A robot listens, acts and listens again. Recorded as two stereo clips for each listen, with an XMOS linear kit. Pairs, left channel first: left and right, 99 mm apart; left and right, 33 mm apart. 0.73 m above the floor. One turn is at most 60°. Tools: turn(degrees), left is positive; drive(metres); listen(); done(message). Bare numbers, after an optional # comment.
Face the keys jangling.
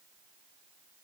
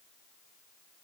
listen()
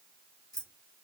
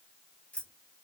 # The keys jangling: about 35° left or 145° left.
turn(35)
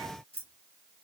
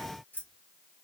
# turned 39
# So it is at 100° left.
turn(60)
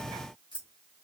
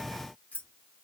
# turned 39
# The keys jangling is now 65° left.
turn(60)
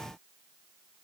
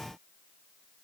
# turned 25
# Nothing new. It was at 40° left.
turn(40)
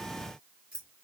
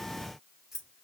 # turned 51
# The keys jangling is now 10° right.
turn(-10)
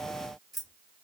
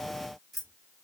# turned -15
done("Facing the keys jangling.")